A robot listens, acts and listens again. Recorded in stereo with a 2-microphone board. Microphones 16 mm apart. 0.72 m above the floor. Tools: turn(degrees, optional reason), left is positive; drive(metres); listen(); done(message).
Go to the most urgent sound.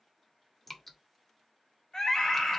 turn(degrees=50, reason="The scream: about 50° left or 130° left.")
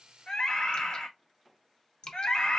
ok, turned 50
turn(degrees=75, reason="So it is at 75° left.")
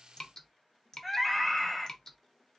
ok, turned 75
drive(metres=1.0)
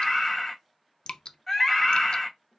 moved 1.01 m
drive(metres=1.0)
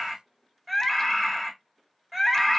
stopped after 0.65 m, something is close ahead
turn(degrees=-10, reason="The scream is now 10° right.")
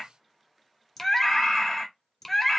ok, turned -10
done("I am next to the scream.")